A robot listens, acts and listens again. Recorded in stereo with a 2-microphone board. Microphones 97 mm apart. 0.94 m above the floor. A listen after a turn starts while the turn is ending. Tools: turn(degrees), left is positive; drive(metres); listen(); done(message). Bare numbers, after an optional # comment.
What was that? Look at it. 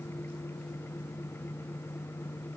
listen()
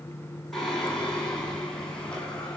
turn(30)
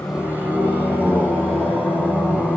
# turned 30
# So it is at 10° right.
turn(-10)
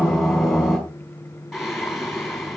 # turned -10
done("Facing the singing, over 4 m away.")